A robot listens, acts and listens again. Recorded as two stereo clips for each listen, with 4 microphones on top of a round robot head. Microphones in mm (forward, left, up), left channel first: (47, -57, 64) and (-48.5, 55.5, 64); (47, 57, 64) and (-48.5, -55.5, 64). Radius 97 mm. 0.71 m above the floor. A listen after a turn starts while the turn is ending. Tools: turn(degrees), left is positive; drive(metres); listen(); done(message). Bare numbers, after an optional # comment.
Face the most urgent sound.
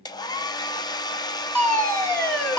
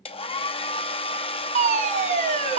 # The fire alarm: 125° right.
turn(-125)
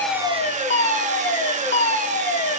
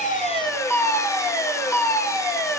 # The fire alarm is now 20° right.
turn(-20)
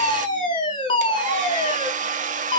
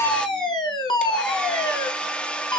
done("Found it: a fire alarm, straight ahead, 2 to 4 m away.")